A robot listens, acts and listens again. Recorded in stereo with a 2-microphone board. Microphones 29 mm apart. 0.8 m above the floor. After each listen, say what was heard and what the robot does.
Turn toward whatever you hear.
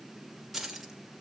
Turn 30° left.
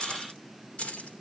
So it is at 125° left. Turn 125° left.
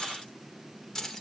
The keys jangling is now 15° left. Turn 15° left.
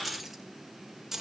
The keys jangling is now 15° right. Turn 15° right.
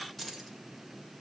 Facing the keys jangling.